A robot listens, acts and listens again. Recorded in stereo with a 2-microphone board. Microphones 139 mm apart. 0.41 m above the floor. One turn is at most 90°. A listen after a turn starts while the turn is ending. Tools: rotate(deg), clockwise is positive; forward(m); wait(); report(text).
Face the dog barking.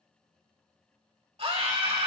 wait()
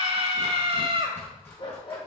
rotate(-35)
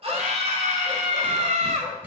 wait()
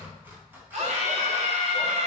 wait()
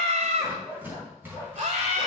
rotate(15)
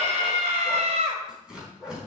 report("Facing the dog barking, over 4 m away.")